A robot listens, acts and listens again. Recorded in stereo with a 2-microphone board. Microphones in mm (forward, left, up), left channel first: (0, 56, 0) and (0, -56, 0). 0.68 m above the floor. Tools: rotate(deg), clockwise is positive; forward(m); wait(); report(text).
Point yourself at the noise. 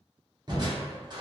rotate(40)
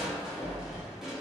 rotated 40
report("Facing the crushing.")